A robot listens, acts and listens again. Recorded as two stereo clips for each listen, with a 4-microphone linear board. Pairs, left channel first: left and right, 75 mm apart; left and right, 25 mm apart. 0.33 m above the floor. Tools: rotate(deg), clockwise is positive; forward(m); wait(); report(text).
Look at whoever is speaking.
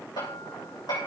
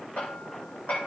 wait()
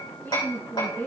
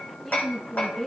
rotate(-25)
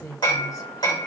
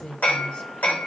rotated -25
rotate(-130)
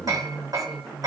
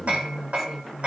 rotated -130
report("Found it: a woman speaking, straight ahead, 2 to 4 m away.")